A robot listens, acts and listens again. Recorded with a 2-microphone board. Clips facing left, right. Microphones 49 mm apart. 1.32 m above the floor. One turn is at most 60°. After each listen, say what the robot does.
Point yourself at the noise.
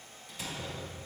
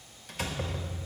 Turn 55° right.
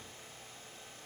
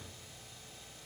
Keep listening.
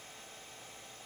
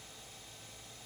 I heard a door slam, but can't make it out now. It was about straight ahead or 70° right.